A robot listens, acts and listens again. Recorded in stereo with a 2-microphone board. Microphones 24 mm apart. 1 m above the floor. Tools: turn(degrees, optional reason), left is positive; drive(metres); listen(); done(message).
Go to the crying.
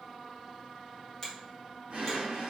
listen()
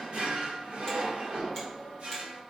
listen()
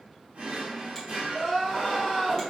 turn(degrees=-20, reason="The crying: about 20° right or 160° right.")
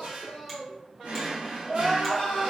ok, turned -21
turn(degrees=-140, reason="So it is at 140° right.")
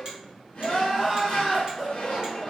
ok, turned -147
drive(metres=1.0)
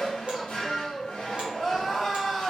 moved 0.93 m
turn(degrees=15, reason="The crying is now 15° left.")
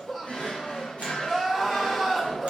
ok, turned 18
drive(metres=1.0)
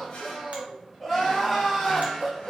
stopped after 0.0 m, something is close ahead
done("I am next to the crying.")